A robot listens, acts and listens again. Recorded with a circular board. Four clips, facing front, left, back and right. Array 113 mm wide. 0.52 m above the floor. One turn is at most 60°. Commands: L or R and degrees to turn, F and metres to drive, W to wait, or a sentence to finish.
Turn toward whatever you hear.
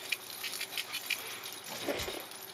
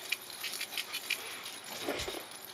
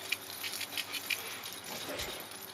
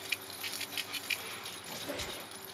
L45
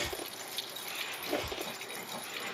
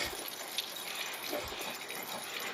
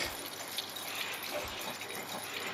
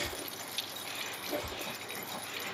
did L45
Facing the squeak, under 1 m away.